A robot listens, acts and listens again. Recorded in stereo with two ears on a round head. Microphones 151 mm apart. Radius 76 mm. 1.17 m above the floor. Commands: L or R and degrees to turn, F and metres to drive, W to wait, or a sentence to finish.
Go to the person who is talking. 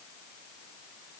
W
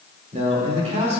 R40
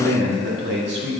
R105
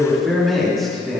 F1.0
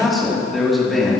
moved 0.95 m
F1.0
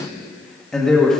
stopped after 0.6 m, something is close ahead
I am next to the man speaking.